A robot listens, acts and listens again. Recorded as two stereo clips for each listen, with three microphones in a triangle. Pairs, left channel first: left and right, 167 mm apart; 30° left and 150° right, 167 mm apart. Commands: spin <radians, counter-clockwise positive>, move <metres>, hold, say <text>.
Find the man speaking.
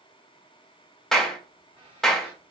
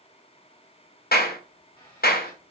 hold
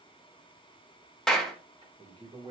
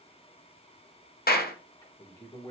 spin -0.61
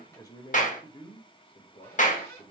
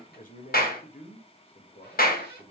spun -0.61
spin 1.05
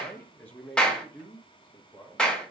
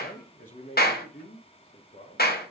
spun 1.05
spin 0.26
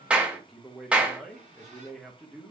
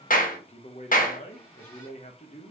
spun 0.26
say Found it: a man speaking, straight ahead, 1 to 2 m away.